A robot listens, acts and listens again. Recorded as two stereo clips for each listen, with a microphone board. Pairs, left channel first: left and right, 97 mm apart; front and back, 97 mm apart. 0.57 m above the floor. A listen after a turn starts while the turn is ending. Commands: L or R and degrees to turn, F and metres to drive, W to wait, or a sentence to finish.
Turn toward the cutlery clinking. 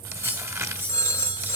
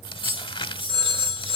R155
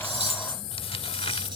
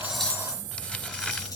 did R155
W
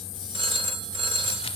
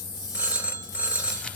W
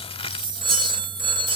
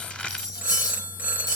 R50
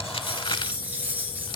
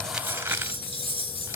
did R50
R15
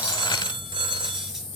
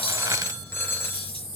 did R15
W
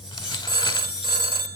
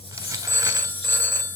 Facing the cutlery clinking, over 4 m away.